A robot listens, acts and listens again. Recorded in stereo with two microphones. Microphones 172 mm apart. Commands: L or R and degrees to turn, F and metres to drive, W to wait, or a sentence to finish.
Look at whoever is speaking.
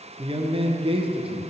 R30
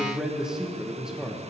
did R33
Found it: a man speaking, straight ahead, under 1 m away.